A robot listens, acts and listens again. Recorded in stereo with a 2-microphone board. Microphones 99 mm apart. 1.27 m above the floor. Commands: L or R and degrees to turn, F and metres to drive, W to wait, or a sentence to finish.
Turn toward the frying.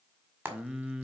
R25
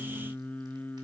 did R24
W
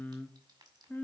W
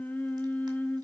I heard frying, but can't make it out now. It was about straight ahead or 130° right.